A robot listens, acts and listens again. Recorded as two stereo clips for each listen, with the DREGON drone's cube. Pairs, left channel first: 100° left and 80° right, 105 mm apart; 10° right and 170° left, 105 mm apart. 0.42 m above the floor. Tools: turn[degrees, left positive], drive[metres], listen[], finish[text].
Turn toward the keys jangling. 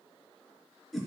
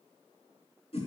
Action: listen[]
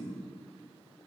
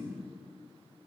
Action: listen[]
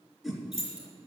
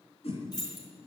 Thought: The keys jangling: 60° right.
Action: turn[-60]
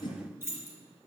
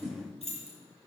Thought: The keys jangling is now 10° right.
Action: turn[-10]
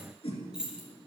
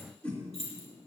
Action: finish[Found it: keys jangling, straight ahead, over 4 m away.]